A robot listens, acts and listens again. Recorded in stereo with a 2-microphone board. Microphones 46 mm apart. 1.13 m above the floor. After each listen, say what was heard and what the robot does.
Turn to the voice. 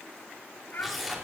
Turn 90° left.
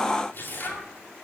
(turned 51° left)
Nothing new. It was at 40° left. Turn 40° left.
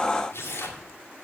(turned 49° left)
Nothing new. It was at 10° right. Turn 10° right.
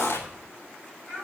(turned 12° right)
The child speaking is now 10° left. Turn 10° left.
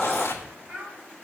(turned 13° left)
Facing the child speaking.